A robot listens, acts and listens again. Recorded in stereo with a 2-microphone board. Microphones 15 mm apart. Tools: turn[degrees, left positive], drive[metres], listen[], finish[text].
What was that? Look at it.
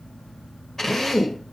Thought: The drill: about 30° left or 150° left.
Action: turn[30]
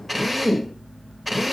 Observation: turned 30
Action: finish[Facing the drill.]